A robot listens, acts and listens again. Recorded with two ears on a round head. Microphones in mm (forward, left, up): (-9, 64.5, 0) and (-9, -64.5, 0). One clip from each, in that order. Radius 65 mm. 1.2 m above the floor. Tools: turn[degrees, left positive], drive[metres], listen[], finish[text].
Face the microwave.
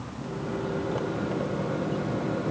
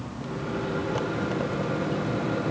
Thought: The microwave: about 35° right or 145° right.
Action: turn[-35]
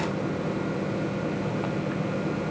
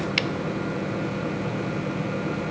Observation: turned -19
Thought: So it is at 15° right.
Action: turn[-15]
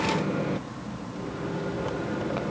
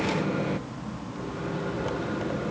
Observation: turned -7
Thought: The microwave is now 10° right.
Action: turn[-10]
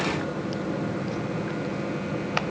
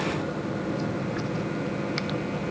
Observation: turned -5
Action: finish[Found it: a microwave, straight ahead.]